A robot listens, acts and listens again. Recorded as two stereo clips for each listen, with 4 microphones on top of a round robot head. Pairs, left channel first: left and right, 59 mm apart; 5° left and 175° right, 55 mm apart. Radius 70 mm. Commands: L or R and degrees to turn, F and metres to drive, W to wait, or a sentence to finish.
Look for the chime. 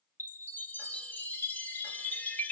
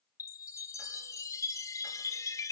L30
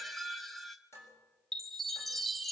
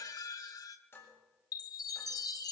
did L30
Facing the chime.